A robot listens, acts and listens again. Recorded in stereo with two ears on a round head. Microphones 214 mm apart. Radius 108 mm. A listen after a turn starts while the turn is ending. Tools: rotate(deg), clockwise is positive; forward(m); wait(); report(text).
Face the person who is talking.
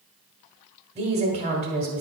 rotate(25)
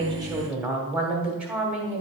report("Facing the woman speaking.")